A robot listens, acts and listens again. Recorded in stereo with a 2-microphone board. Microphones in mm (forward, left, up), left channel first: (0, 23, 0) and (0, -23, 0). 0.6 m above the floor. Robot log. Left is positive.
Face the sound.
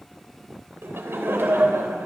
note: The laughter: about 65° right or 115° right.
cmd yaw -65
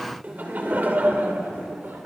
note: So it is at 50° right.
cmd yaw -50
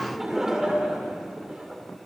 note: The laughter is now 20° right.
cmd yaw -20
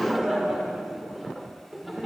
end: Found it: laughter, straight ahead, 2 to 4 m away.